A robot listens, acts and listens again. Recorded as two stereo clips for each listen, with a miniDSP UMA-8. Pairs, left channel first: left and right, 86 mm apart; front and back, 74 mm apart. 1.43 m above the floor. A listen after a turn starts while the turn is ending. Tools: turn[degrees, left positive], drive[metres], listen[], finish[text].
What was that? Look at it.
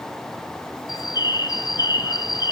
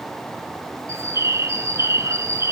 Thought: The bird: 130° left.
Action: turn[130]
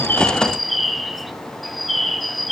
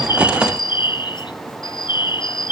Action: finish[Found it: a bird, straight ahead, under 1 m away.]